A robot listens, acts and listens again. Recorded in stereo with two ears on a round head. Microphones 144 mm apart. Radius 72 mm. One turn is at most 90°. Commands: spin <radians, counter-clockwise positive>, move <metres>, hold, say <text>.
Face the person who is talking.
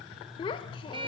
spin 0.52
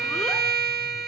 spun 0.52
hold
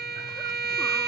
hold
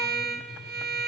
say I heard a child speaking, but can't make it out now. It was about straight ahead or 120° left.